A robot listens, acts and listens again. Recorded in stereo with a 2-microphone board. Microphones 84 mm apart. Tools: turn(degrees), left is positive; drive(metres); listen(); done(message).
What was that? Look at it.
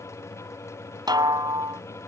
turn(degrees=-60)
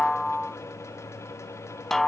done("Found it: a snare drum, straight ahead.")